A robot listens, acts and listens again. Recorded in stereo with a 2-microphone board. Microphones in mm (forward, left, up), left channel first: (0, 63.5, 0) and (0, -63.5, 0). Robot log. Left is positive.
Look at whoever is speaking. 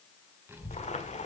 note: The child speaking: about 20° right or 160° right.
cmd yaw -20
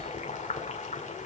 note: So it is at 140° right.
cmd yaw -140
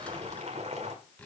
note: The child speaking is now 10° left.
cmd yaw +10
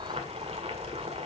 end: Facing the child speaking.